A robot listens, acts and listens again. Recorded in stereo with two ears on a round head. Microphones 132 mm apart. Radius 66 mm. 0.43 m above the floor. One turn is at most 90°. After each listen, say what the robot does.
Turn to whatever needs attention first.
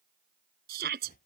Turn 70° right.
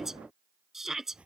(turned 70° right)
Facing the shout.